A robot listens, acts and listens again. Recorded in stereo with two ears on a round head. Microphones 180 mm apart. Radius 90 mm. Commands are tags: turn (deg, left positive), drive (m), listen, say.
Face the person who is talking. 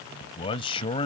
<turn deg="25"/>
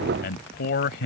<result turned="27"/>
<turn deg="125"/>
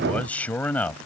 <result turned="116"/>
<turn deg="10"/>
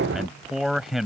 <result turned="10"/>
<say>Found it: a man speaking, straight ahead.</say>